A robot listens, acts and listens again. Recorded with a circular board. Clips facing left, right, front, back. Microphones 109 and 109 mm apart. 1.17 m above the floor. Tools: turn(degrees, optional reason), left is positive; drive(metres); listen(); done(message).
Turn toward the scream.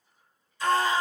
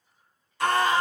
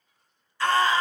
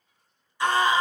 turn(degrees=-110, reason="The scream: 110° right.")
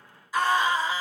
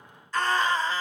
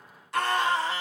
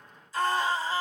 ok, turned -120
turn(degrees=10, reason="The scream is now 10° left.")
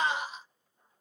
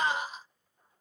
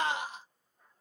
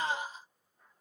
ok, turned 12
done("Found it: a scream, straight ahead, under 1 m away.")